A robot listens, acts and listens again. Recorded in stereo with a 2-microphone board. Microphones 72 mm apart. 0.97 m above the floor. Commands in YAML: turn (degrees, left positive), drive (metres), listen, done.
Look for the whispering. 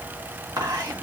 turn: -55
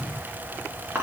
turn: -40
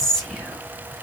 done: "Found it: whispering, straight ahead."